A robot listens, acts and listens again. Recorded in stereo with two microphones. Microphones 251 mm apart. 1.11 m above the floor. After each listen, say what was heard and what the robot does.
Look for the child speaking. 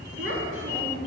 The child speaking: about 55° right or 125° right. Turn 55° right.
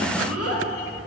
So it is at 75° right. Turn 75° right.
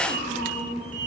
The child speaking is now 35° left. Turn 35° left.
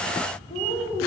The child speaking is now 25° left. Turn 25° left.
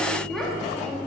Facing the child speaking, 1 to 2 m away.